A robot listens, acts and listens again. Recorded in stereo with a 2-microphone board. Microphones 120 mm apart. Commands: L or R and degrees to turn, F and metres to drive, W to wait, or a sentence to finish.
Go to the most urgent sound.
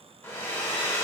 W
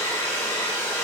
W
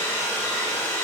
I can't make out anything urgent to turn to.